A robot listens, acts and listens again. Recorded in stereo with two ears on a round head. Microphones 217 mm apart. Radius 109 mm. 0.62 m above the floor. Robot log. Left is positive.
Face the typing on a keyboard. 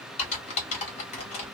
note: The typing on a keyboard: about 30° left or 150° left.
cmd yaw +30
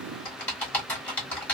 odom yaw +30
end: Found it: typing on a keyboard, straight ahead, 1 to 2 m away.